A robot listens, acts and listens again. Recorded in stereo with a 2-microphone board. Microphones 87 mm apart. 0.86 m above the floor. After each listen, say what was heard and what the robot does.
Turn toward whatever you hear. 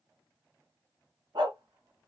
The dog barking: about 65° right or 115° right. Turn 65° right.
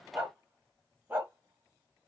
So it is at 25° right. Turn 25° right.
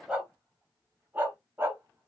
The dog barking is now 30° right. Turn 30° right.
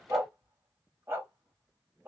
The dog barking is now 30° right. Turn 30° right.
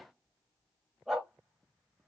Found it: a dog barking, straight ahead.